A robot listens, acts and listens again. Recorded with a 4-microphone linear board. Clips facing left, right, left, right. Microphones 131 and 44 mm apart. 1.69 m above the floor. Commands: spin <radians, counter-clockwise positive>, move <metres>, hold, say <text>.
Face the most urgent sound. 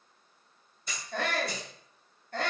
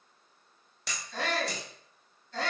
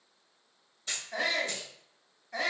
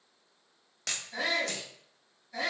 spin 0.96
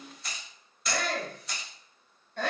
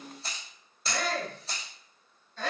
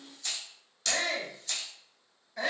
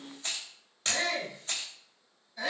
spin 1.13
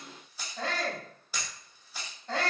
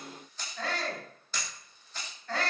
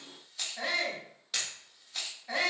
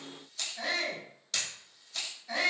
spin 0.44
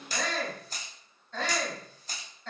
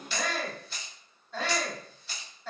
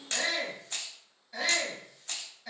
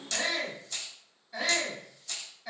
say Facing the shout, 1 to 2 m away.